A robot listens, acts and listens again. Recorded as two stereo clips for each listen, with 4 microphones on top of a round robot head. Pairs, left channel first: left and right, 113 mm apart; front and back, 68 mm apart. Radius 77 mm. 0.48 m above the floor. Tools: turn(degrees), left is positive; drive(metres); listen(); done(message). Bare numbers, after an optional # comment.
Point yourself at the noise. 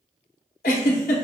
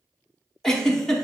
# The giggle: 80° left.
turn(80)
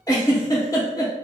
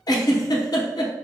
# The giggle is now 20° left.
turn(20)
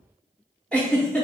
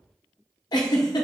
done("Found it: a giggle, straight ahead.")